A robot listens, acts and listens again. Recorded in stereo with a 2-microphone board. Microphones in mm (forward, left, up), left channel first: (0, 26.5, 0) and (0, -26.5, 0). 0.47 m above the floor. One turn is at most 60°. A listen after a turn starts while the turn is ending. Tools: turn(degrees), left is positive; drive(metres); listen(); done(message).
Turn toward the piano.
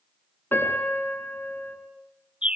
turn(degrees=40)
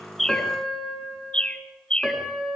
done("Found it: a piano, straight ahead.")